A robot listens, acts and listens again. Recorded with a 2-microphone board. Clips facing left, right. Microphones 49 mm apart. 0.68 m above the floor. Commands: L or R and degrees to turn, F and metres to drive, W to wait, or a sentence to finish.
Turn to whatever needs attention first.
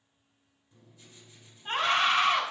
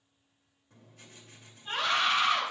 L35
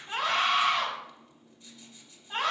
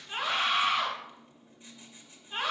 L110
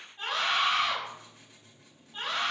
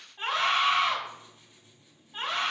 R15
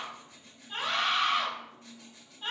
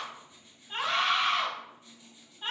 Found it: a scream, straight ahead.